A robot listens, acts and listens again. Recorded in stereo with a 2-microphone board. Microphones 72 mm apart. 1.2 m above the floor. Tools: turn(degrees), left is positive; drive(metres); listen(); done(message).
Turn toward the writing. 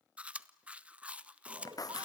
turn(degrees=60)
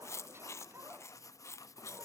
turn(degrees=55)
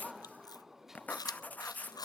turn(degrees=25)
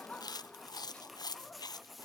done("Facing the writing, under 1 m away.")